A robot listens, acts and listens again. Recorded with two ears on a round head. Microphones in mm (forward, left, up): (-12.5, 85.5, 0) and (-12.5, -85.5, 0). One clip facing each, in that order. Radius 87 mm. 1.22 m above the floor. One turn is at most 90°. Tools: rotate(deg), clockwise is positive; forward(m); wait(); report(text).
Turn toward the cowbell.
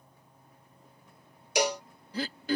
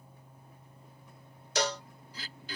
rotate(-30)
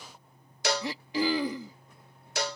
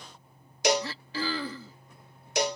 rotate(15)
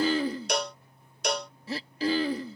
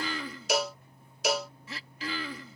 report("Facing the cowbell.")